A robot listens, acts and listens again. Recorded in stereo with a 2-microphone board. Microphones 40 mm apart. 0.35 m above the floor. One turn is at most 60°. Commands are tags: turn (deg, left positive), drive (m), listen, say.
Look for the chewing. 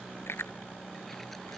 <turn deg="60"/>
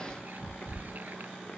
<turn deg="30"/>
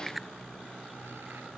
<say>Found it: chewing, straight ahead.</say>